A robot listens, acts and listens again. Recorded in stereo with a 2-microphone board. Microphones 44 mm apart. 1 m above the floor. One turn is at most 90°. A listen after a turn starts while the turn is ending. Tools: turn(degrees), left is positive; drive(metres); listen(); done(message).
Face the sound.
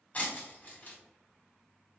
turn(degrees=35)
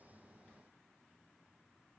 listen()
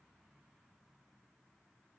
done("I heard breaking glass, but can't make it out now. It was about straight ahead or 110° left.")